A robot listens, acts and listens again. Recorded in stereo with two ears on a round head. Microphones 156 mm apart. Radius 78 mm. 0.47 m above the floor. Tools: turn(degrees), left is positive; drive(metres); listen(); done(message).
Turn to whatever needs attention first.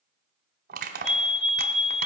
turn(degrees=35)
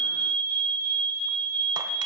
turn(degrees=10)
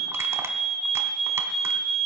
done("Found it: a fire alarm, straight ahead.")